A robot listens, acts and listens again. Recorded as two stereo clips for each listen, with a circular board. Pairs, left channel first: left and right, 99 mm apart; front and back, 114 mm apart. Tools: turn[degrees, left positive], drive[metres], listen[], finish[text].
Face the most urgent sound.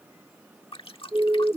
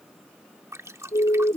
Thought: The siren: 25° right.
Action: turn[-25]
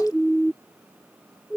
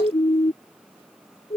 Action: finish[Found it: a siren, straight ahead.]